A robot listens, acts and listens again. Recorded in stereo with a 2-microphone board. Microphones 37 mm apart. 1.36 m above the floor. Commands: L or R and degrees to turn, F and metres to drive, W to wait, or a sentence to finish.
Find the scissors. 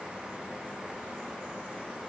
W
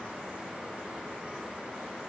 W
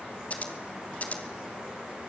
L40
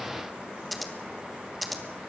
Found it: scissors, straight ahead, 2 to 4 m away.